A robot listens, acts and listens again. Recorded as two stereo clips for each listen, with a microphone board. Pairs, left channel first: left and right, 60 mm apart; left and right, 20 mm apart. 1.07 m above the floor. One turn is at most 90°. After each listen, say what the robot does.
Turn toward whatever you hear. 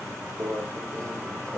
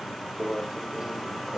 Turn 70° right.
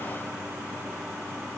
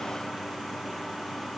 Keep listening.
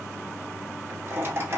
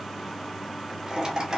Turn 45° right.
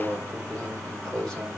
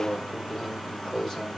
Turn 10° left.
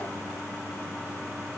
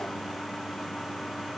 Keep listening.
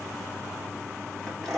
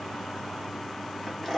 Found it: a microwave, straight ahead, 1 to 2 m away.